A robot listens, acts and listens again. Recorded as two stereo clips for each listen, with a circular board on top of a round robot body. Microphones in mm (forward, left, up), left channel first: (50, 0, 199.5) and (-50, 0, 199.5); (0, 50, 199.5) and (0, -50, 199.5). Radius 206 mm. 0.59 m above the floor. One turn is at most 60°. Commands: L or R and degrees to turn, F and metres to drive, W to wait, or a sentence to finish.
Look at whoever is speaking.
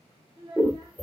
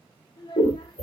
L60
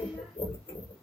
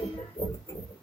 L60
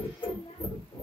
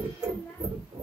L20
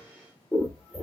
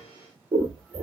I heard a child speaking from this way, but can't make it out now.